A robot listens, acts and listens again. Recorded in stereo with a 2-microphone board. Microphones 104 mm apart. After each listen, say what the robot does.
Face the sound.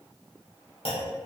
Turn 65° left.
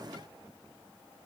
Keep listening.
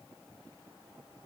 I heard a clunk, but can't make it out now. It was about straight ahead or 50° left.